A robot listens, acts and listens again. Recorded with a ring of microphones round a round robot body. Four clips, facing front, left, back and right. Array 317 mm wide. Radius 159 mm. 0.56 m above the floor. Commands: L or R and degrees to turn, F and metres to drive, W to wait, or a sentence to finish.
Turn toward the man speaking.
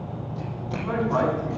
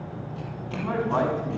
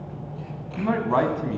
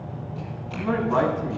R175
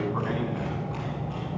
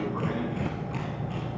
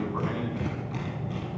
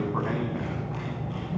W
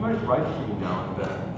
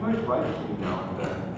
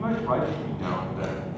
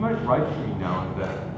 R85
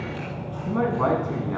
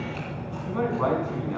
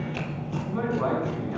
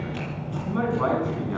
R15
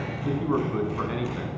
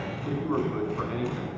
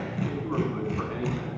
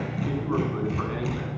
W
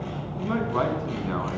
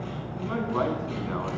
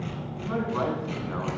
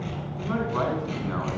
W
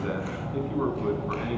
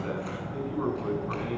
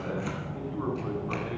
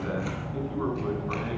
I heard a man speaking from this way, but can't make it out now.